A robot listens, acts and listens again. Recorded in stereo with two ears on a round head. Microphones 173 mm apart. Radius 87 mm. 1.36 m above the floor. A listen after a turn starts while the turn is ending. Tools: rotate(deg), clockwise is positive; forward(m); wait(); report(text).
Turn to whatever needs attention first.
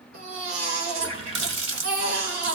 rotate(90)
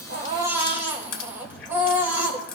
rotate(10)
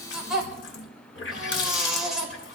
report("Found it: a baby crying, straight ahead.")